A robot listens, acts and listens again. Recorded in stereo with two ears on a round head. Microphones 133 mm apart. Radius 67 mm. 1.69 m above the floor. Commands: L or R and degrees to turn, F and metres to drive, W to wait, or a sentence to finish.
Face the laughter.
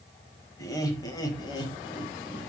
L30
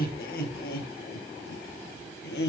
L95
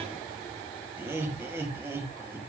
R15
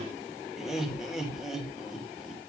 Found it: laughter, straight ahead, 2 to 4 m away.